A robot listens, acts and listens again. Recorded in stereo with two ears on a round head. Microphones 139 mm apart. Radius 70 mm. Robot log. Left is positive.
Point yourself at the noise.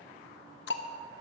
cmd yaw +90
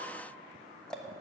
end: Found it: ticking, straight ahead.